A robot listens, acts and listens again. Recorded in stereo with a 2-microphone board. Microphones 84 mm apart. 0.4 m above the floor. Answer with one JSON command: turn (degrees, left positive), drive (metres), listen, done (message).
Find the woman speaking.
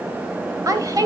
{"turn": -45}
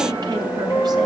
{"listen": true}
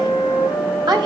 {"turn": -120}
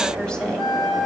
{"listen": true}
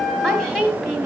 {"done": "Facing the woman speaking."}